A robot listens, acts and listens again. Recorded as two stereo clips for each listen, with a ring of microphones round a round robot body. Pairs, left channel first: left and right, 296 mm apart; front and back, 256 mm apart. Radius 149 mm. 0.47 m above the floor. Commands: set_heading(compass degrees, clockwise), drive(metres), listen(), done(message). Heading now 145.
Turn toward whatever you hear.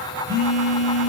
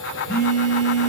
set_heading(175)
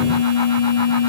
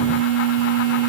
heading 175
set_heading(190)
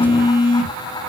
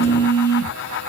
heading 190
done("Found it: a phone buzzing, straight ahead.")